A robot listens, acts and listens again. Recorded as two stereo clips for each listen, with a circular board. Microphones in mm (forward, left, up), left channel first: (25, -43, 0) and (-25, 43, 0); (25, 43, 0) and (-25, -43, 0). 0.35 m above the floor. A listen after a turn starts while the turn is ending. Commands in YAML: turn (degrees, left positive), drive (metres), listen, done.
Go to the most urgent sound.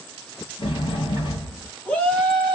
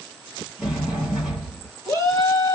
turn: 15
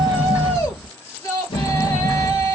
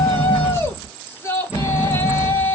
drive: 1.0
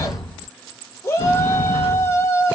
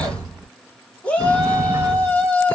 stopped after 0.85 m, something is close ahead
turn: -10
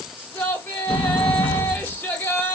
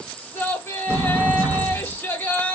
done: "I am next to the shout."